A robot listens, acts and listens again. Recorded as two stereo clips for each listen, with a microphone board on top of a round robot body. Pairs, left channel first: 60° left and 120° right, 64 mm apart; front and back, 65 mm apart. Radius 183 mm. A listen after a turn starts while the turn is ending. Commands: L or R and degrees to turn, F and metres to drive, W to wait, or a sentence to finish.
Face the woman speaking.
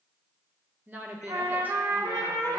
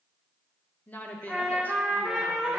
R65
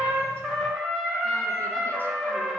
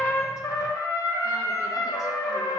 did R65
W
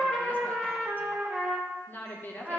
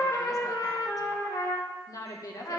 Found it: a woman speaking, straight ahead.